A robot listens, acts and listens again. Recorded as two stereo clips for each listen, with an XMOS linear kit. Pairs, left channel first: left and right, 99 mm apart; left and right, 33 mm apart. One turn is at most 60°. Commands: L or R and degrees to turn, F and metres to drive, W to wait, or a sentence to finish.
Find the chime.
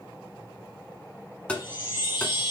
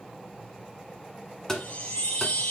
L55
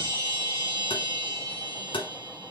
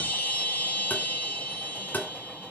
L60
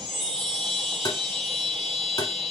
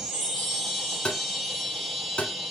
Found it: a chime, straight ahead.